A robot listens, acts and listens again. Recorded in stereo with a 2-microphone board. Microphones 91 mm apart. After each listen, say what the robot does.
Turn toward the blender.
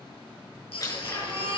Turn 40° left.
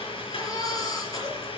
Turn 100° left.
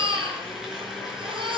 Found it: a blender, straight ahead.